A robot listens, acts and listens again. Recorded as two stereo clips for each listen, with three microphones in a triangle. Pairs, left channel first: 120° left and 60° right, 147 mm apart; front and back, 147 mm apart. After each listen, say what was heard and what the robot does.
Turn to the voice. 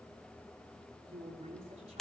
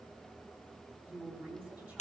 The woman speaking: 100° right. Turn 100° right.
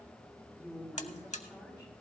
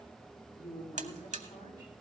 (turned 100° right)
The woman speaking is now 20° left. Turn 20° left.
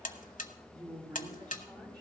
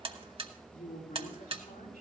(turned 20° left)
Facing the woman speaking.